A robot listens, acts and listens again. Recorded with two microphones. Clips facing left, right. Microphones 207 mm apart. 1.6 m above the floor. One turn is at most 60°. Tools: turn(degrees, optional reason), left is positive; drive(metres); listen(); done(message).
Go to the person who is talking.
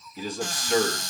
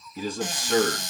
turn(degrees=-45, reason="The man speaking: about 45° right or 135° right.")
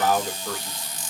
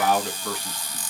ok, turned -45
turn(degrees=-60, reason="So it is at 90° right.")
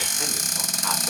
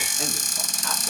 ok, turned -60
turn(degrees=-30, reason="Nothing new. It was at 30° right.")
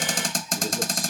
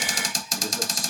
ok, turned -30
listen()
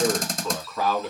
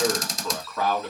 drive(metres=1.0)
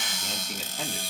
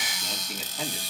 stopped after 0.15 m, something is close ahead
done("Something is in my way. I am facing the man speaking but have not reached it.")